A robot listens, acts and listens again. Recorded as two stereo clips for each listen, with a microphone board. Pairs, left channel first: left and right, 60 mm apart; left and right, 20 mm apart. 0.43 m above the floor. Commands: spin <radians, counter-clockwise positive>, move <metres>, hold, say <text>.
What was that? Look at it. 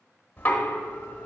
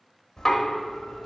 spin 0.52
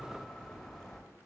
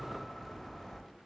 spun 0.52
say Found it: knocking, straight ahead.